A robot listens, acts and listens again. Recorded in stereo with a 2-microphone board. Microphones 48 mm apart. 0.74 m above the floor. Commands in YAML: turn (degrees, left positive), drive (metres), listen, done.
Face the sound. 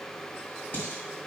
turn: 45
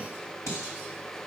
turn: 85
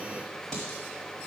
turn: 10
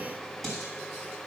done: "Found it: dishes clattering, straight ahead, 2 to 4 m away."